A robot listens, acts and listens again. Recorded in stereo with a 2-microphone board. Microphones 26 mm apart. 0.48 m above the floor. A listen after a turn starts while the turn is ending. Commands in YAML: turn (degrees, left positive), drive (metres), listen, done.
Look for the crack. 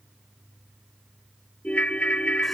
listen: true
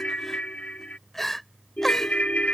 listen: true
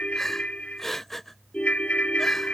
done: "I can't make out a crack, only a ringtone and crying."